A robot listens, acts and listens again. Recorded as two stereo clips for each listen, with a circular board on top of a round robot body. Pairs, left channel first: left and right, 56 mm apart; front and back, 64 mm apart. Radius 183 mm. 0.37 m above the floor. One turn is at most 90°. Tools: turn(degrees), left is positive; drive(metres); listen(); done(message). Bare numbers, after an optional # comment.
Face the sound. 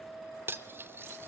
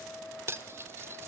# The cutlery clinking: 130° right.
turn(-90)
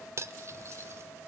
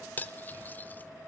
# The cutlery clinking is now 60° right.
turn(-60)
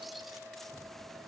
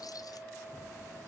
listen()
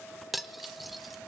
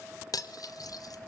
done("Facing the cutlery clinking, 1 to 2 m away.")